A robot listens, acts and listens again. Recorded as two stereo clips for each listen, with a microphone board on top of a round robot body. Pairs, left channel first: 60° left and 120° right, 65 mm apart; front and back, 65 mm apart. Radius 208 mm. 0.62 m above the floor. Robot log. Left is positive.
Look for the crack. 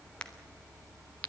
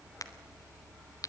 note: The crack: 15° right.
cmd yaw -15
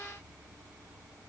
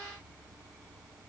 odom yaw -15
end: Facing where the crack came from. I can't hear it now.